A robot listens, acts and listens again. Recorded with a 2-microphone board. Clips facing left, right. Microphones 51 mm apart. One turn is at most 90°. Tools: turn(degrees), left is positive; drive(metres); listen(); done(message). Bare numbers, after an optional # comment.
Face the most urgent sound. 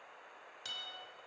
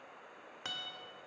listen()
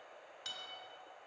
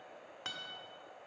listen()
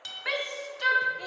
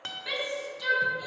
# The shout: about 45° left or 135° left.
turn(45)
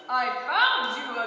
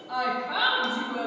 # So it is at 75° left.
turn(75)
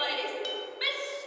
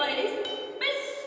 # The shout is now 10° right.
turn(-10)
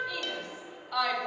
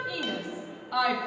done("Found it: a shout, straight ahead.")